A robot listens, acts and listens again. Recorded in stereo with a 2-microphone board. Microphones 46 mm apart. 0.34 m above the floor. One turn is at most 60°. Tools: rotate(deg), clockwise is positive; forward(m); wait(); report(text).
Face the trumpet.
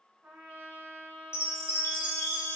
rotate(55)
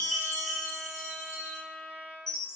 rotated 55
rotate(45)
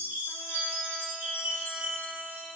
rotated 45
wait()
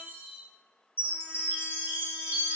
wait()
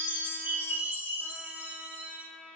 report("Facing the trumpet, 1 to 2 m away.")